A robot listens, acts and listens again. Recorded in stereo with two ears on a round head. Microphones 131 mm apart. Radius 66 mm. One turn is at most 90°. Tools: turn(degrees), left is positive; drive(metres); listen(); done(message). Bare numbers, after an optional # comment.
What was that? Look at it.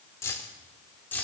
turn(30)
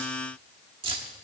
# So it is at 35° right.
turn(-35)
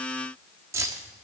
# The keys jangling is now 20° right.
turn(-20)
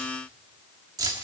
# The keys jangling is now 25° right.
turn(-25)
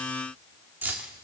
# The keys jangling is now 15° right.
turn(-15)
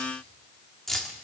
done("Found it: keys jangling, straight ahead, 1 to 2 m away.")